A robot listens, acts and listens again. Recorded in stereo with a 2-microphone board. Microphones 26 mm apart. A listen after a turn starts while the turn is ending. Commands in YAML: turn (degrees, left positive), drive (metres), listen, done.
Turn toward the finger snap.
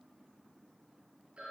listen: true
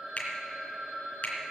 turn: 65
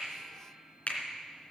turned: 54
turn: 55
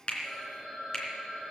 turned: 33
turn: 20
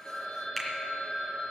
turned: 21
done: "Facing the finger snap, 2 to 4 m away."